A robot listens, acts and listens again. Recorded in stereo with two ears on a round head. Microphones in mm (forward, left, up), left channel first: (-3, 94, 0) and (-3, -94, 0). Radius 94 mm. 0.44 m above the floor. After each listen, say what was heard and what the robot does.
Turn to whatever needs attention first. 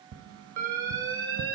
The alarm: about 15° right or 165° right. Turn 15° right.
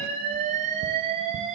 So it is at 150° right. Turn 150° right.
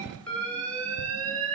The alarm is now 10° left. Turn 10° left.
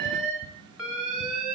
Found it: an alarm, straight ahead.